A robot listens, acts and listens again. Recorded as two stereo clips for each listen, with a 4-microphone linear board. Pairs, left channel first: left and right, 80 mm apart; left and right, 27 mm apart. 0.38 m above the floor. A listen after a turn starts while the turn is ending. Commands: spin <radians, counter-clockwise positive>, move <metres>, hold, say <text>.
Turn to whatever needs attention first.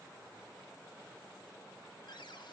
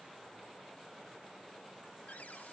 hold
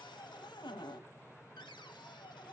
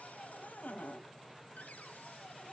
hold
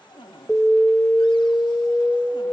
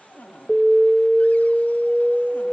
spin 0.52
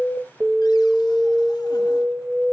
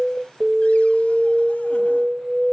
spin -0.44
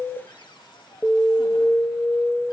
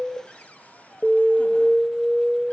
say Facing the alarm.